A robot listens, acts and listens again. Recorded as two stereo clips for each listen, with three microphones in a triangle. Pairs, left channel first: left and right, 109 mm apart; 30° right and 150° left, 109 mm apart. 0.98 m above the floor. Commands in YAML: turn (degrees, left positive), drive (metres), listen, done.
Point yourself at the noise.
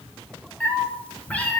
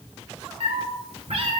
turn: 165
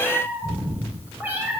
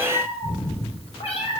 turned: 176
turn: -20
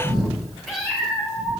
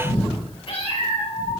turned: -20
done: "Facing the cat meowing, 2 to 4 m away."